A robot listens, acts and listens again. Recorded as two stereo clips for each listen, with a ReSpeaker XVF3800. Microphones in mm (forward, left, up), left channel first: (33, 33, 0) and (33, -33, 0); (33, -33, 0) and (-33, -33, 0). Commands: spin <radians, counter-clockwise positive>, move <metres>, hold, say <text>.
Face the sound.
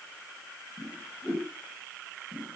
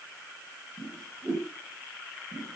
spin 2.62
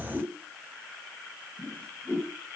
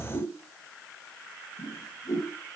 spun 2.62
spin 0.26
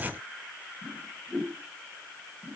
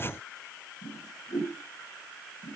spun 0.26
say Facing the whoosh, over 4 m away.